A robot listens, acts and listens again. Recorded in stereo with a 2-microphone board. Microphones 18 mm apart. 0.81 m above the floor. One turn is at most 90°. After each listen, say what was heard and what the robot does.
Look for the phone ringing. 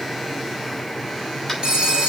The phone ringing: about 65° right or 115° right. Turn 65° right.
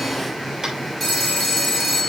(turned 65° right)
Found it: a phone ringing, straight ahead.